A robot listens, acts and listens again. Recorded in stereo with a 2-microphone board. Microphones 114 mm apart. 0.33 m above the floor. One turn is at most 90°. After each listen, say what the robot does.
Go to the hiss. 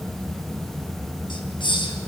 Turn 45° left.
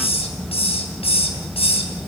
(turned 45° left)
Turn 80° left.
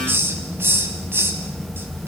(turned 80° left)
Turn 25° right.
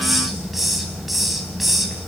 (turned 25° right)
Drive 1.0 m forward.
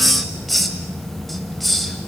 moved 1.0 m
Drive 1.0 m forward.
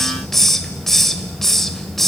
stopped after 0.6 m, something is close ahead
Arrived at the hiss, straight ahead.